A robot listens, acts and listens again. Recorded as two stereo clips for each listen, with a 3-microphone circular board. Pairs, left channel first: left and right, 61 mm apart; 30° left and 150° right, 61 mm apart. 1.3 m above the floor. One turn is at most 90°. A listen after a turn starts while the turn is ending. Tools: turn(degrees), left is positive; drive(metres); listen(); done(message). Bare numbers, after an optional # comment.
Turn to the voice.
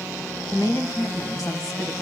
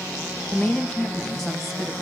# The woman speaking: 115° left.
turn(90)
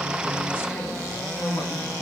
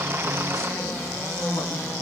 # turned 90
# Nothing new. It was at 25° left.
turn(25)
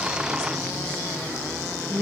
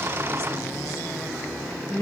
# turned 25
# The woman speaking is now 15° left.
turn(15)
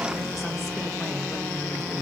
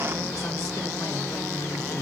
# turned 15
listen()
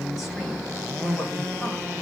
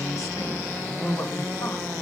done("Found it: a woman speaking, straight ahead.")